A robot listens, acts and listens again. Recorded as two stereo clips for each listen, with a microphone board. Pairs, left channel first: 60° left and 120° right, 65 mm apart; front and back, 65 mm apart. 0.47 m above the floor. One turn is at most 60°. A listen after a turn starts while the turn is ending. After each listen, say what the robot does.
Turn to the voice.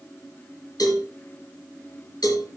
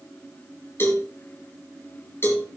Keep listening.
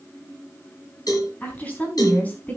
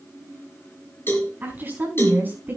Turn 60° left.
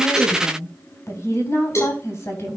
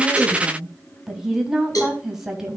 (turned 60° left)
Turn 60° left.
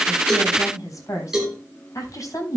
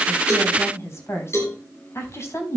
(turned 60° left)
Turn 40° left.
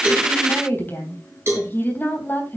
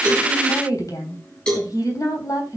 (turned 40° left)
Facing the woman speaking, 2 to 4 m away.